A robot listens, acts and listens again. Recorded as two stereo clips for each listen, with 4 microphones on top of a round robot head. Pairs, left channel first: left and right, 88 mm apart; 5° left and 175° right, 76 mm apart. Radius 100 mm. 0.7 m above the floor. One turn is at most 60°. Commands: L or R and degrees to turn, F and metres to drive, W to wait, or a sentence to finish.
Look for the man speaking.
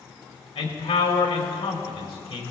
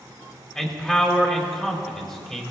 L60
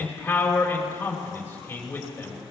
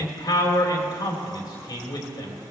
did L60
L25
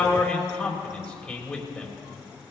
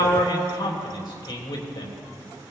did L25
L10
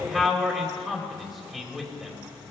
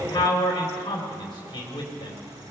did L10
Found it: a man speaking, straight ahead, 2 to 4 m away.